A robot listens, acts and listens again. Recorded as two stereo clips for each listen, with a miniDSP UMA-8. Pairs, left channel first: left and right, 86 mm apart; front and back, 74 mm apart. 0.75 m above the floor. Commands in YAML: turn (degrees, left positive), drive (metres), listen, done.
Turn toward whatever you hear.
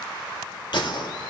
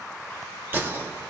turn: 120
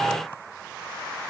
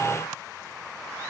done: "Facing where the gunshot came from. I can't hear it now."